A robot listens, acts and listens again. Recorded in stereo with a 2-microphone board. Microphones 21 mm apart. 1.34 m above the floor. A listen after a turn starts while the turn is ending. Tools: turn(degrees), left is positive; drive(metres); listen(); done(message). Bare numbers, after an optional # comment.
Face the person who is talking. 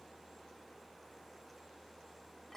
listen()
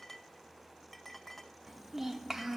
# The child speaking: about 20° right or 160° right.
turn(-20)
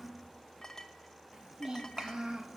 # So it is at 140° right.
turn(-140)
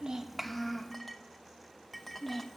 done("Found it: a child speaking, straight ahead, 1 to 2 m away.")